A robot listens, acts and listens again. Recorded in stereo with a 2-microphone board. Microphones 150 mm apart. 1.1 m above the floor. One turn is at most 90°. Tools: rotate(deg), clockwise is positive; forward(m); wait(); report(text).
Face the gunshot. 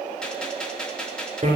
rotate(-30)
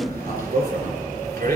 wait()
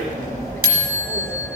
report("I heard a gunshot, but can't make it out now. It was about 25° right or 145° left.")